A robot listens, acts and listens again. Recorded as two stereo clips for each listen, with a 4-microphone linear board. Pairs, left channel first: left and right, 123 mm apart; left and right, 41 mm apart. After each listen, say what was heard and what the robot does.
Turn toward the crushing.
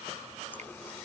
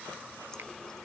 Keep listening.
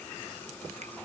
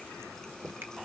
Keep listening.
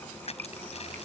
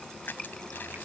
The crushing: about 60° left or 120° left. Turn 60° left.
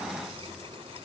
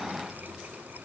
Keep listening.
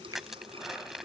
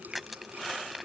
Facing the crushing.